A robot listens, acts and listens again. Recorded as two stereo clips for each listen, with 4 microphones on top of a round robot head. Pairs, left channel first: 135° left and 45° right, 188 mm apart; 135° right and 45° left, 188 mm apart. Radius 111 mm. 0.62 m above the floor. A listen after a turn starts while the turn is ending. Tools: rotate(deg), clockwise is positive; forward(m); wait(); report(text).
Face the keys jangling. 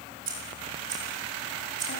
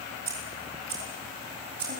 rotate(-10)
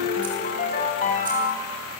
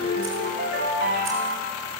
wait()
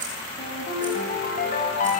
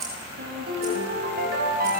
report("Found it: keys jangling, straight ahead.")